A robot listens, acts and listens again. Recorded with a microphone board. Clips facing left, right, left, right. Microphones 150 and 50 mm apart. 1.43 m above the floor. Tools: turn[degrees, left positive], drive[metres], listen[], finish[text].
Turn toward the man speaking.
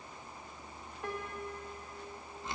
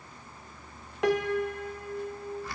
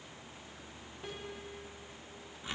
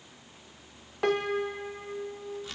Action: listen[]
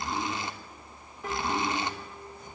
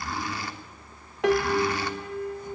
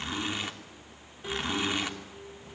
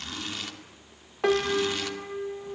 Action: listen[]
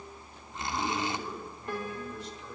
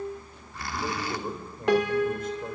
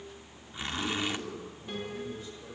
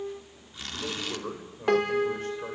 Thought: The man speaking: about 50° right or 130° right.
Action: turn[-50]
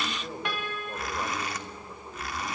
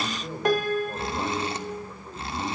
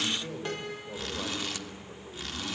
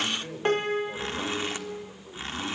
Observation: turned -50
Action: finish[Facing the man speaking, over 4 m away.]